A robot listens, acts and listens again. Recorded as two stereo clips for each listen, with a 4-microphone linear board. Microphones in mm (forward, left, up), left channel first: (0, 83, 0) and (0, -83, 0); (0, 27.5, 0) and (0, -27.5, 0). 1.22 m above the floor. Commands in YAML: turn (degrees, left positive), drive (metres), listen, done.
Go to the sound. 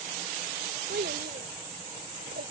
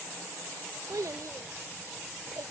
turn: -90
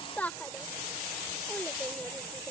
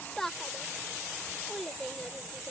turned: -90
turn: 10
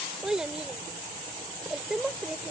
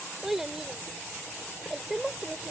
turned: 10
drive: 1.0
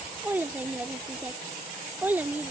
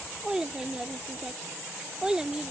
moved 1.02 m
turn: -10
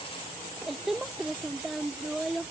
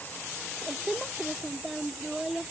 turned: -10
drive: 1.0
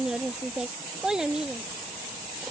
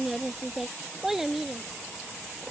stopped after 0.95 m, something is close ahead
done: "I am next to the child speaking."